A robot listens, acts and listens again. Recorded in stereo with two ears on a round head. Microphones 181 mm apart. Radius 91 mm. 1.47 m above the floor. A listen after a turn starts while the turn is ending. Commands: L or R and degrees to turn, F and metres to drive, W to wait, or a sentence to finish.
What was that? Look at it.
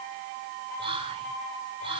R25
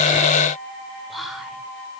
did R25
Facing the whispering.